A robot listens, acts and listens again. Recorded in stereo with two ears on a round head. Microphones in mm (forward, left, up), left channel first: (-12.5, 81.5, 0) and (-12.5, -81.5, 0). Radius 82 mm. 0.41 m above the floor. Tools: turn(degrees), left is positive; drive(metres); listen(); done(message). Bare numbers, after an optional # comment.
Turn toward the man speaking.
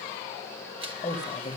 # The man speaking: about 25° left or 155° left.
turn(25)
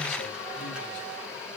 listen()
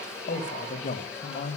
# So it is at 125° left.
turn(125)
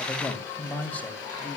# The man speaking is now 10° left.
turn(10)
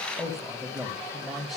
done("Found it: a man speaking, straight ahead.")